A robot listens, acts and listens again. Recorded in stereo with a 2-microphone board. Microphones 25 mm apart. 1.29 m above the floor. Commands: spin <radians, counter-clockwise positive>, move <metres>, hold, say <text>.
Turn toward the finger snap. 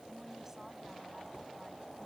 hold
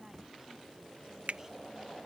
spin -1.13
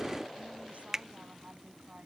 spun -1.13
spin -0.35
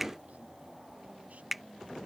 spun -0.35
say Found it: a finger snap, straight ahead.